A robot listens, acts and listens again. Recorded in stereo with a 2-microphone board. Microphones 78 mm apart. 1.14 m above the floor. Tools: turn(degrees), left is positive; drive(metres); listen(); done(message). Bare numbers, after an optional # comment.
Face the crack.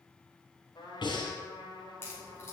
# The crack: about 30° left or 150° left.
turn(30)
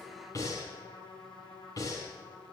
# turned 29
listen()
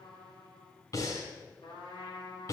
done("I heard a crack, but can't make it out now. It was about straight ahead or 120° left.")